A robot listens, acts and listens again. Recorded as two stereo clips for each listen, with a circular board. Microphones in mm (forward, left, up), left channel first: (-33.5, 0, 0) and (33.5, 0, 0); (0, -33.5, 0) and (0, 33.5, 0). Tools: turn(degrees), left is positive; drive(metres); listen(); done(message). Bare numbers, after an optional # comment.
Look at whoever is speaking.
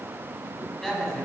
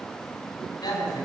# The woman speaking: 100° right.
turn(-100)
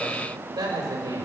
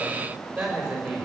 # The woman speaking is now 10° left.
turn(10)
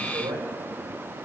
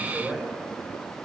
done("Facing the woman speaking.")